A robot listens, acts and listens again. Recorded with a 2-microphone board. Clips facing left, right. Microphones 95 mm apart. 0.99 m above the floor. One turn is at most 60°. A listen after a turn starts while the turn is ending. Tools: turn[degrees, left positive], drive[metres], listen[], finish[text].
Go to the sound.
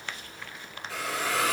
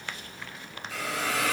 Thought: The hiss: about 75° left or 105° left.
Action: turn[60]
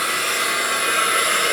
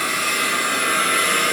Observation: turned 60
Thought: So it is at 15° left.
Action: turn[15]
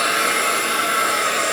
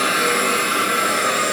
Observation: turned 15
Action: drive[1.0]
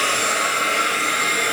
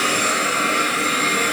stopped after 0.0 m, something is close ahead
Action: finish[Blocked. The hiss is further on, straight ahead.]